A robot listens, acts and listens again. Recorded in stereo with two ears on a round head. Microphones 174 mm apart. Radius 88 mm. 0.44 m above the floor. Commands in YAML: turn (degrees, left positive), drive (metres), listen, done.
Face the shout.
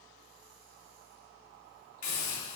listen: true
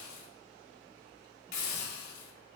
listen: true
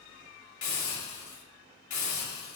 done: "I can't make out a shout, only a hiss."